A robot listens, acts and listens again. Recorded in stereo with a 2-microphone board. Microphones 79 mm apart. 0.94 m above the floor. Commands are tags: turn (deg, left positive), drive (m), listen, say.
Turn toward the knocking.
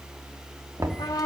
<turn deg="-50"/>
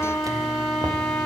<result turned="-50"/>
<listen/>
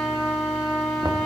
<listen/>
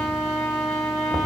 <say>I heard knocking, but can't make it out now. It was about straight ahead or 80° right.</say>